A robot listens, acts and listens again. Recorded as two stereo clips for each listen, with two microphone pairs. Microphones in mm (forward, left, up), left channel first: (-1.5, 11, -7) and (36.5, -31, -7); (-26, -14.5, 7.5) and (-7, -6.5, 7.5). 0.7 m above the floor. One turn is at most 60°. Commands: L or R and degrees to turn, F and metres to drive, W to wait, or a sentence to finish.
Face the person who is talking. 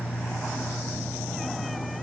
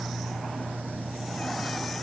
W
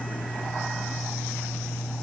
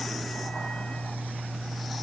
W
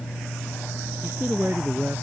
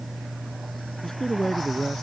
R60
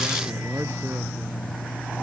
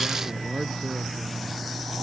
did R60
R35
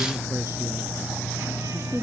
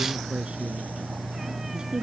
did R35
R10
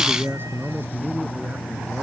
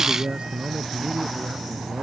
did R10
Facing the man speaking.